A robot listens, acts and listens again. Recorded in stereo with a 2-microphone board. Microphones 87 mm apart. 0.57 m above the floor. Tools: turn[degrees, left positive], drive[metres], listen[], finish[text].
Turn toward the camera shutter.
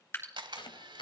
Thought: The camera shutter: about 75° right or 105° right.
Action: turn[-75]
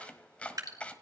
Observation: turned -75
Action: listen[]
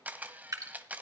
Thought: So it is at 20° right.
Action: turn[-20]
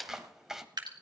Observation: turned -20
Action: finish[Found it: a camera shutter, straight ahead.]